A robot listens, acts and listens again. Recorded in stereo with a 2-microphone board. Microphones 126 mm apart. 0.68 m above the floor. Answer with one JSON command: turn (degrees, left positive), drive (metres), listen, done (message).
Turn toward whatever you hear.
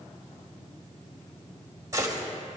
{"turn": -30}
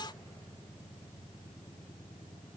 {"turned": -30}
{"listen": true}
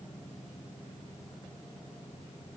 {"done": "I heard a gunshot, but can't make it out now. It was about straight ahead or 120° right."}